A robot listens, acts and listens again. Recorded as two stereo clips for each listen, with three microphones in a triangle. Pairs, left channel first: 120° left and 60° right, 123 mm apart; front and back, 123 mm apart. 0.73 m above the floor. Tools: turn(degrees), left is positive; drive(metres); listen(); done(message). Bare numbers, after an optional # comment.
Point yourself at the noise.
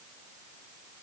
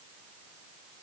listen()
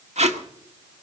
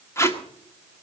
# The tape being pulled: 65° right.
turn(-65)
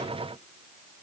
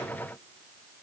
listen()
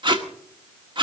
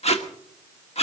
# The tape being pulled is now 20° right.
turn(-20)
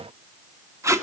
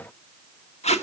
done("Found it: tape being pulled, straight ahead.")